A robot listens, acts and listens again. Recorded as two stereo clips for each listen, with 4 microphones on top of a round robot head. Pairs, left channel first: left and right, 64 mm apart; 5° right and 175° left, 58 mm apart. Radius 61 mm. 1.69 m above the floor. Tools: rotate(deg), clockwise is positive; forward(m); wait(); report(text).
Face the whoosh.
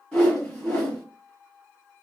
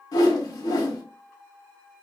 rotate(-10)
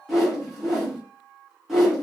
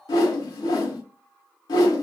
report("Found it: a whoosh, straight ahead, under 1 m away.")